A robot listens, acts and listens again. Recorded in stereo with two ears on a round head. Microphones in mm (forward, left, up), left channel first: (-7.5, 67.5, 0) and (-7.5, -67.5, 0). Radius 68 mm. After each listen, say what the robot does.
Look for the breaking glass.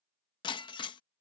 Turn 30° left.
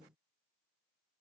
Keep listening.
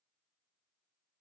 I heard breaking glass, but can't make it out now. It was about straight ahead or 120° left.